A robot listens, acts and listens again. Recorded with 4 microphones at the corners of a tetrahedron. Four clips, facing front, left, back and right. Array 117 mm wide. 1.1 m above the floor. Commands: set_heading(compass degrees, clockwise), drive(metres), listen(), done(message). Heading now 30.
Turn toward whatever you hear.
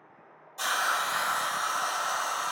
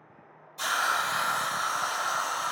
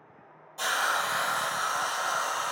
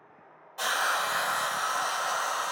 set_heading(120)
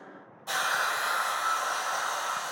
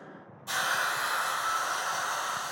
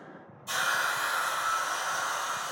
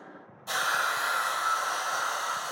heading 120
set_heading(140)
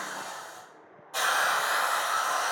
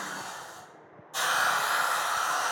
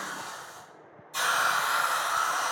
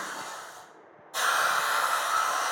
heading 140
done("Facing the hiss.")